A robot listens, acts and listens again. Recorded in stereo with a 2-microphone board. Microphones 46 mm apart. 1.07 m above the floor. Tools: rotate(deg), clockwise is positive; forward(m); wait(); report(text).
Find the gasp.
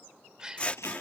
rotate(20)
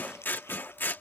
wait()
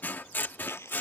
report("I heard a gasp, but can't make it out now. It was about straight ahead or 140° right.")